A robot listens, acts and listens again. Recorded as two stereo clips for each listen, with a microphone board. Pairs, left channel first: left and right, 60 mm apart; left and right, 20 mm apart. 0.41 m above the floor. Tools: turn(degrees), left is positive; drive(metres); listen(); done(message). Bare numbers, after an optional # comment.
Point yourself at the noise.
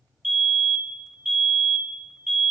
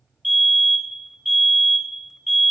turn(30)
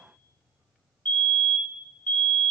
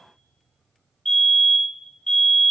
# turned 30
# So it is at 150° left.
turn(150)
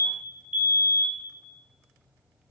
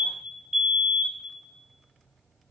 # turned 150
# The fire alarm is now 35° right.
turn(-35)
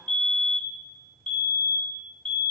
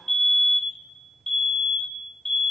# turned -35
# The fire alarm is now 20° left.
turn(20)
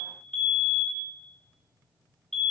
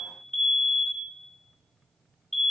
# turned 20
done("Facing the fire alarm.")